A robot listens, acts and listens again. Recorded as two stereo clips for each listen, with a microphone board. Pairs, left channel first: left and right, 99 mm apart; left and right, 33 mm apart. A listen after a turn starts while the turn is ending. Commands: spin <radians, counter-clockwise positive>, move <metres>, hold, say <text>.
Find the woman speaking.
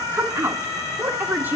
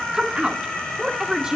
spin -0.35
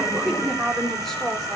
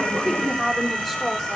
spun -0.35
say Facing the woman speaking, over 4 m away.